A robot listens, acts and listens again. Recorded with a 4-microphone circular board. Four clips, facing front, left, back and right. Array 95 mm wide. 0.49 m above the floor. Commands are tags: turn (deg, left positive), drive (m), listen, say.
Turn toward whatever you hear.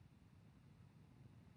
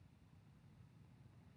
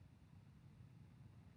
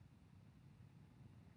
<listen/>
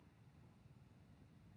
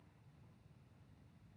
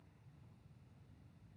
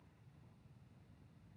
<listen/>
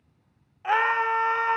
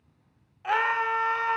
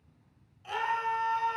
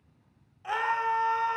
<turn deg="15"/>
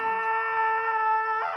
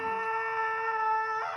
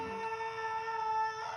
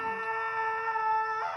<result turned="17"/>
<say>Found it: a scream, straight ahead.</say>